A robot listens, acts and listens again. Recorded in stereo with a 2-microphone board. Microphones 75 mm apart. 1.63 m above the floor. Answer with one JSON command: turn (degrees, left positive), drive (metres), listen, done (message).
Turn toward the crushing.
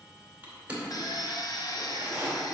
{"turn": -20}
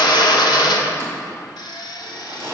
{"turn": -135}
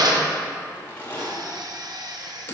{"turn": 25}
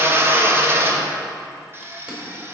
{"listen": true}
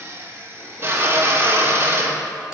{"listen": true}
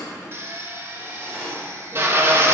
{"turn": -15}
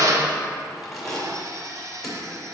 {"done": "Facing the crushing, 2 to 4 m away."}